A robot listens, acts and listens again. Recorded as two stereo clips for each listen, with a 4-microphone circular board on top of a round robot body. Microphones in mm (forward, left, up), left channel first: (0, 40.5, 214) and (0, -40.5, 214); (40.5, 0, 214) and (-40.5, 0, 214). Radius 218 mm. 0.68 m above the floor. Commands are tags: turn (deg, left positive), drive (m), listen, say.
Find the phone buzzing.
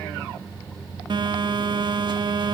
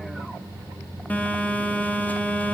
<turn deg="-70"/>
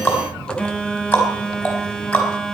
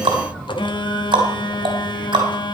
<turn deg="10"/>
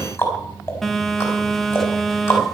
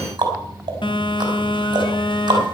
<say>Facing the phone buzzing.</say>